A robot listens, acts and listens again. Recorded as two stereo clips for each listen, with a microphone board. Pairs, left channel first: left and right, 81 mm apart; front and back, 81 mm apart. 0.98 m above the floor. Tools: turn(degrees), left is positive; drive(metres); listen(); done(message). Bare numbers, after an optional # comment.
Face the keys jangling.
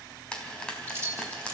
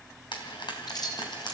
# The keys jangling: 30° right.
turn(-30)
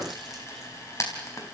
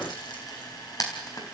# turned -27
listen()
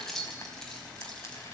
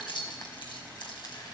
done("Found it: keys jangling, straight ahead.")